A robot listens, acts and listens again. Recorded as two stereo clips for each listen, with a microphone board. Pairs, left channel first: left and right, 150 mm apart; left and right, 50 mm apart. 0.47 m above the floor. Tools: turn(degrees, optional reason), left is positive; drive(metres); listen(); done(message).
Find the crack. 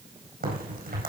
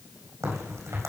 turn(degrees=-90)
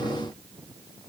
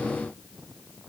done("I heard a crack from this way, but can't make it out now.")